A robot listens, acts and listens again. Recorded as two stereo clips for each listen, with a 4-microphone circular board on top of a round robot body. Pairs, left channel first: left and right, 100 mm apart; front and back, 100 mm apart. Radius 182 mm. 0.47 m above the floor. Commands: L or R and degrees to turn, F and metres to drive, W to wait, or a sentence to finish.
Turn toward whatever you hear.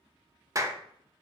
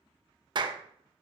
R145
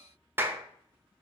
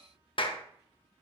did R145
R25
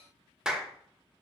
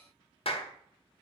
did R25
Found it: a clap, straight ahead.